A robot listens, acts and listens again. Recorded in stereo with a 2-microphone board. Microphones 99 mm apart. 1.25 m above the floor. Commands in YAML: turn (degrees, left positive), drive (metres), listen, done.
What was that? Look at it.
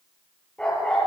turn: 30
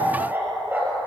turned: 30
turn: -20
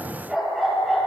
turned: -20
done: "Found it: a dog barking, straight ahead, over 4 m away."